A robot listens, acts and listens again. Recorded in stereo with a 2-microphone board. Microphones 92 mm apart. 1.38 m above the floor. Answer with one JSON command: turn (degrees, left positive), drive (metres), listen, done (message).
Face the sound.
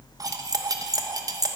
{"turn": -40}
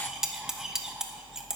{"done": "Found it: cutlery clinking, straight ahead."}